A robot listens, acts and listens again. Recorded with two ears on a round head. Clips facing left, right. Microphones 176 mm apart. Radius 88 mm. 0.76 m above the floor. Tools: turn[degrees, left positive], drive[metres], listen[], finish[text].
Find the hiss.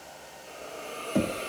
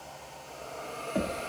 Thought: The hiss: about 45° left or 135° left.
Action: turn[45]
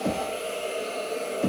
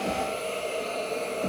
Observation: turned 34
Thought: So it is at 10° left.
Action: turn[10]
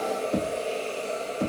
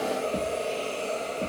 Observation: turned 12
Action: finish[Found it: a hiss, straight ahead.]